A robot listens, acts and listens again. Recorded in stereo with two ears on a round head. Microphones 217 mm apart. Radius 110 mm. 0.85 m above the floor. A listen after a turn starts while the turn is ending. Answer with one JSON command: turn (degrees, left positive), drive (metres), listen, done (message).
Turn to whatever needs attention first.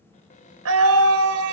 {"turn": -70}
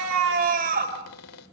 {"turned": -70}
{"turn": -35}
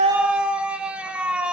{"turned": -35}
{"done": "Found it: a scream, straight ahead, over 4 m away."}